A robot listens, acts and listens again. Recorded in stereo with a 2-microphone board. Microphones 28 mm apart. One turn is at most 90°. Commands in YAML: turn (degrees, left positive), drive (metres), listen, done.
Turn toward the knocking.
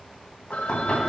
turn: 35
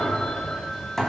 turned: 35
done: "Found it: knocking, straight ahead, 2 to 4 m away."